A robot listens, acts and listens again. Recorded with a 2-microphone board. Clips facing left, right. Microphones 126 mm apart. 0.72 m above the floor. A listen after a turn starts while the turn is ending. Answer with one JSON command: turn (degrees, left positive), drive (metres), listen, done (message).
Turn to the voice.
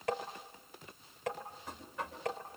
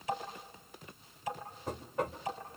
{"listen": true}
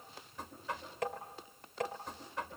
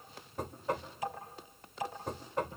{"listen": true}
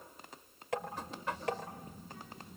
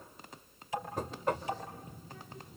{"turn": 55}
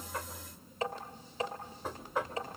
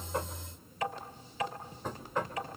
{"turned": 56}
{"turn": 70}
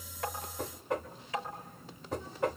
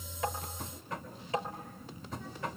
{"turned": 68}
{"done": "Facing the child speaking, over 4 m away."}